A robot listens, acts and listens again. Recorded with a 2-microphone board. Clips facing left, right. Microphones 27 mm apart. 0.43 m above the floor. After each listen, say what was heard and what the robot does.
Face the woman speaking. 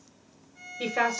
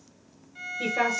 The woman speaking: about 40° left or 140° left. Turn 40° left.
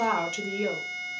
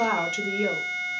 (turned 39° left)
So it is at 10° right. Turn 10° right.
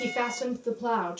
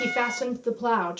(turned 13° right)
The woman speaking is now 35° right. Turn 35° right.
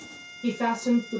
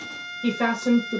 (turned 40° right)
The woman speaking is now 35° right. Turn 35° right.
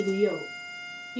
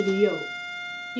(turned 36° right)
The woman speaking is now 20° right. Turn 20° right.
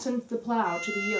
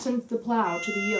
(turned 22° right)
Found it: a woman speaking, straight ahead, 2 to 4 m away.